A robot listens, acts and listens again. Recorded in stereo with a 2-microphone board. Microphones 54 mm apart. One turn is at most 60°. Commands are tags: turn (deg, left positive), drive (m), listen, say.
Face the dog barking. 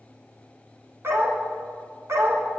<turn deg="-55"/>
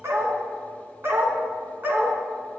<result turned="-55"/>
<turn deg="-40"/>
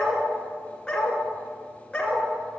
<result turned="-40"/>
<turn deg="20"/>
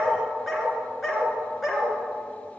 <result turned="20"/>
<say>Facing the dog barking.</say>